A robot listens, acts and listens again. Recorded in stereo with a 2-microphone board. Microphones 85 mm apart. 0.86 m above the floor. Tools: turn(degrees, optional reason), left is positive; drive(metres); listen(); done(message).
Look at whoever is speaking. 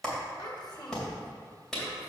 turn(degrees=65, reason="The child speaking: about 65° left or 115° left.")
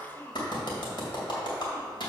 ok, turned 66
turn(degrees=25, reason="So it is at 25° left.")
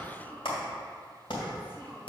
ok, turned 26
turn(degrees=25, reason="The child speaking is now 25° left.")
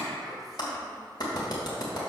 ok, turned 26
listen()
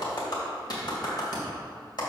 listen()
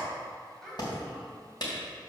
done("Facing the child speaking, 2 to 4 m away.")